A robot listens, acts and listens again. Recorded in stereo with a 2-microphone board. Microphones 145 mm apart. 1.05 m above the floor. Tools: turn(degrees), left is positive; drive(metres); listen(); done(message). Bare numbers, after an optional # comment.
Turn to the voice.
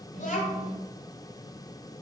# The child speaking: about 70° left or 110° left.
turn(70)
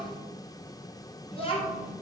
# So it is at 45° left.
turn(45)
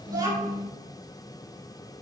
# The child speaking is now 25° right.
turn(-25)
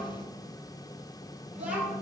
# The child speaking is now 10° right.
turn(-10)
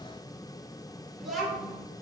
done("Found it: a child speaking, straight ahead, 2 to 4 m away.")